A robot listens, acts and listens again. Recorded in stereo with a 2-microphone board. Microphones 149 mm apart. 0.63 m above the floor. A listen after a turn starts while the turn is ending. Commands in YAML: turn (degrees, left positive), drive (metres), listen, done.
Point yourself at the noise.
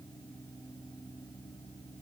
listen: true
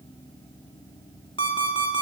turn: 35
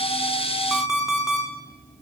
done: "Facing the alarm clock, 2 to 4 m away."